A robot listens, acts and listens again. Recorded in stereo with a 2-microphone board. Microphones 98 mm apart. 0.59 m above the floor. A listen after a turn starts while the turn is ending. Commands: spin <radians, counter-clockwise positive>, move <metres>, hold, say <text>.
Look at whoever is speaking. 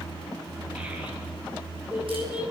spin -0.26
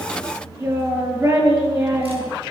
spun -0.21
spin -2.62
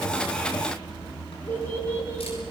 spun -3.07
spin 0.44
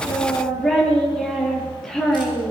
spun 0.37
say Facing the child speaking, over 4 m away.